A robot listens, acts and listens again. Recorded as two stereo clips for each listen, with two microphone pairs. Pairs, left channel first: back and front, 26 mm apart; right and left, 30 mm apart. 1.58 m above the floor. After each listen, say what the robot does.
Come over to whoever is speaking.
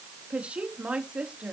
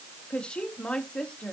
Turn 35° right.
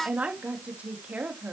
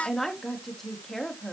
Turn 10° right.
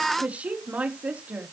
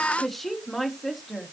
Drive 1.0 m forward.
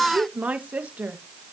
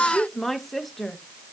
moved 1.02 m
Drive 1.0 m forward.
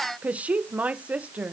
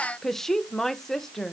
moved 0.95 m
Turn 15° right.
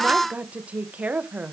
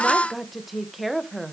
Drive 1.0 m forward.
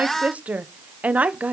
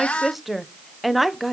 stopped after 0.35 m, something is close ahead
Arrived at the woman speaking, straight ahead.